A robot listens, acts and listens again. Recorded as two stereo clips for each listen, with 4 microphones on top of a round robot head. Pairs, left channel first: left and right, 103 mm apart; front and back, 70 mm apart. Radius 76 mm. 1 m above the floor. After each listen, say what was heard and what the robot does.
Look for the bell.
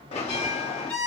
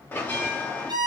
The bell: 65° left. Turn 65° left.
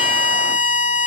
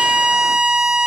Keep listening.
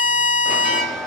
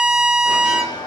Facing the bell, under 1 m away.